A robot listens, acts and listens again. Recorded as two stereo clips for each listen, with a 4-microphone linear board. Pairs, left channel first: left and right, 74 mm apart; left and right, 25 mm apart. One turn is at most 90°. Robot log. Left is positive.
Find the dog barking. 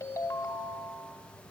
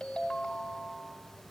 cmd idle
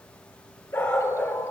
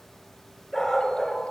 note: The dog barking: about 30° left or 150° left.
cmd yaw +30
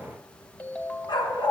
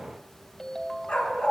note: So it is at 110° left.
cmd yaw +90
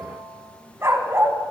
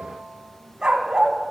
note: The dog barking is now 30° right.
cmd yaw -30
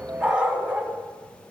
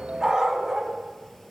note: The dog barking is now 15° right.
cmd yaw -15
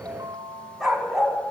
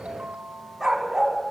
end: Found it: a dog barking, straight ahead, 1 to 2 m away.